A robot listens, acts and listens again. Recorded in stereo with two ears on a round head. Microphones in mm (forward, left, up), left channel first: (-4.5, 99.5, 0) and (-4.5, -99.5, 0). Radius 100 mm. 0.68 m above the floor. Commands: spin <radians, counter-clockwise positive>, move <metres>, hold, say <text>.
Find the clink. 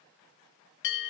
hold
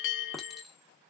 spin 0.52
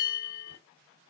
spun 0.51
hold
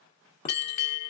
hold
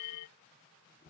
spin 2.62
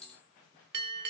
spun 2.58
say Facing the clink.